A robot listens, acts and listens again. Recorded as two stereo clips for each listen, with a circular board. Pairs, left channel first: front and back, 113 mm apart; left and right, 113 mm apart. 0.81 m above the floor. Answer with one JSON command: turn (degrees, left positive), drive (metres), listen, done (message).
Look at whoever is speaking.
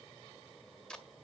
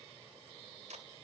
{"listen": true}
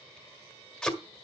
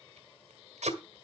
{"listen": true}
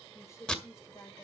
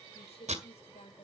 {"turn": 65}
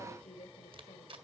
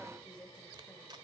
{"turn": 10}
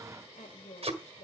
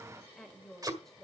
{"done": "Found it: a woman speaking, straight ahead, 2 to 4 m away."}